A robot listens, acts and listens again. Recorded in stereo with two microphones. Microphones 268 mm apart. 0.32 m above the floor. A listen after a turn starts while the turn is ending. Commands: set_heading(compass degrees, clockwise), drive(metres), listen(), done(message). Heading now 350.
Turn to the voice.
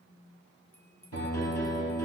listen()
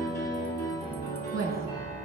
set_heading(300)
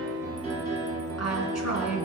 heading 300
set_heading(225)
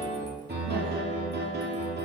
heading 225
listen()
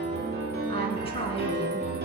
set_heading(205)
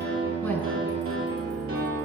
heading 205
listen()
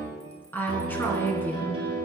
set_heading(195)
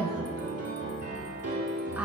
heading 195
done("Found it: a woman speaking, straight ahead.")